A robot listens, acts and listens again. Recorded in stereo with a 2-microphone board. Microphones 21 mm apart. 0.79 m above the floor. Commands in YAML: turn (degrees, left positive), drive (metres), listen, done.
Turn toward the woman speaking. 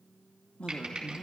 turn: 60
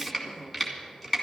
listen: true
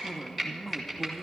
turn: 15
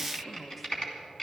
listen: true
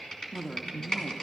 done: "Facing the woman speaking."